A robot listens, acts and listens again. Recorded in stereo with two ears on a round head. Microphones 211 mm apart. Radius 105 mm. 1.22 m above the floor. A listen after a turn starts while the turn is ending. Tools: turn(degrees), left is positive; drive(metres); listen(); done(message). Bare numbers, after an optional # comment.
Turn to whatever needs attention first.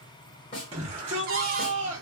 # The shout: about 25° right or 155° right.
turn(-25)
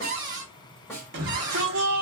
# So it is at 130° right.
turn(-130)
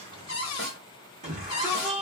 # The shout is now 30° right.
turn(-30)
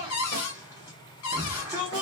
# The shout is now 15° right.
turn(-15)
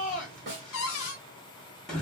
done("Facing the shout, 1 to 2 m away.")